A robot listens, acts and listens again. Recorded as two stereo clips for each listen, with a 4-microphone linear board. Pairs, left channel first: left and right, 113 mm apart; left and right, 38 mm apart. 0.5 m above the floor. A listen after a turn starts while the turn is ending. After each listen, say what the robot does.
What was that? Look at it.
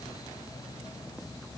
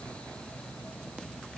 Keep listening.
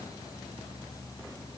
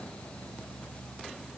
Keep listening.
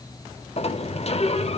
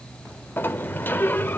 Turn 65° left.
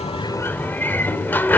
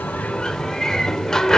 Turn 20° left.
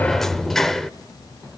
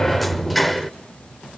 Facing the sliding door.